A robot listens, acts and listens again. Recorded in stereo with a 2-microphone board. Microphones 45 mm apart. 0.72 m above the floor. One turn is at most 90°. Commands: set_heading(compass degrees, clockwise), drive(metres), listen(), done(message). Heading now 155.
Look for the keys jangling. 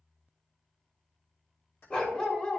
set_heading(95)
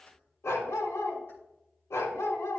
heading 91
listen()
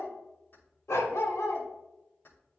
set_heading(36)
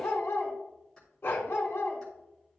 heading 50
set_heading(35)
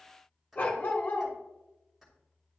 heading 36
done("Facing the keys jangling, 2 to 4 m away.")